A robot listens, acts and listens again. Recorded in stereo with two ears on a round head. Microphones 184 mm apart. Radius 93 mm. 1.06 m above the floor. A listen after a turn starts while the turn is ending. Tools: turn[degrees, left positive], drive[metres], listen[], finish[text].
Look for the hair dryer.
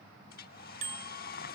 Thought: The hair dryer: about 45° left or 135° left.
Action: turn[45]
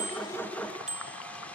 Action: listen[]
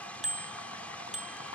Action: finish[Facing the hair dryer.]